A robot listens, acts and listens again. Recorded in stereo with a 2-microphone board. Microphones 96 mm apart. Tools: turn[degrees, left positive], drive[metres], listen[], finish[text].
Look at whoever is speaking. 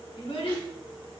Thought: The child speaking: about 65° left or 115° left.
Action: turn[65]
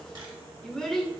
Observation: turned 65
Action: finish[Facing the child speaking.]